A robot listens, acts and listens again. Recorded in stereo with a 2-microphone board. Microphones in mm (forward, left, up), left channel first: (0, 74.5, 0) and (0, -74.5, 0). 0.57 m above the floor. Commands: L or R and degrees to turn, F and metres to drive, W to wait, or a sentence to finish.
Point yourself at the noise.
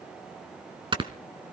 R35
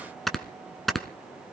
Facing the snoring, 1 to 2 m away.